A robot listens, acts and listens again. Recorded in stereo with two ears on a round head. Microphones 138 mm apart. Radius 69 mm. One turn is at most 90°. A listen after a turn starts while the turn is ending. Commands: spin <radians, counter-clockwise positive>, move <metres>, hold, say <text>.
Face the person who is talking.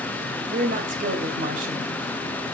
spin -1.05
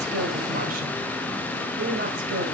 spin -1.05
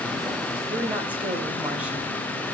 spin -0.17
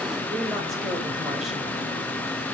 hold
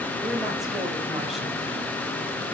hold
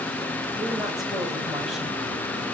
say Facing where the woman speaking came from. I can't hear it now.